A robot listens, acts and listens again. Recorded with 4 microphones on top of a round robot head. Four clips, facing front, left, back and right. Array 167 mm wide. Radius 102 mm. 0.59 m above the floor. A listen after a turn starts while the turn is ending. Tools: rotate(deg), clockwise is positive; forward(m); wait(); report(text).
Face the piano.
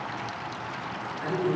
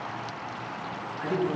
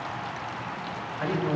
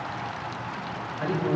wait()
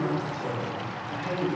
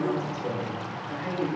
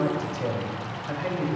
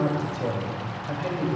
wait()
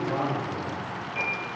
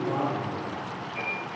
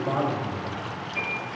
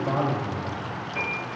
rotate(75)
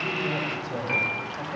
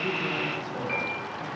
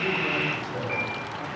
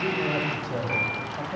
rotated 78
report("Facing the piano.")